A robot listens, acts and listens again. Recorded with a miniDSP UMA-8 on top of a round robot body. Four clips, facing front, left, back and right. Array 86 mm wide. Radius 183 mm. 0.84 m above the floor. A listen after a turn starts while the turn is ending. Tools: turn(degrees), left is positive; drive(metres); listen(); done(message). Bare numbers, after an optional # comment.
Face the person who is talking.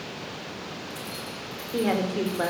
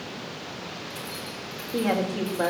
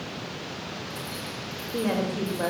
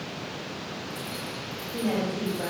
# The woman speaking: 35° left.
turn(35)
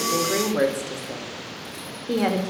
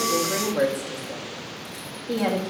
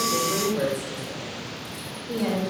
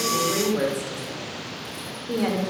done("Facing the woman speaking, over 4 m away.")